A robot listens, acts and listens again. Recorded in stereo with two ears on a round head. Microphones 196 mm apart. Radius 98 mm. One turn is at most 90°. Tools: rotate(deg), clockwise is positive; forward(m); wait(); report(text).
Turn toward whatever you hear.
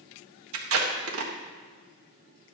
rotate(70)
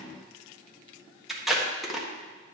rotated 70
report("Facing the tape being pulled.")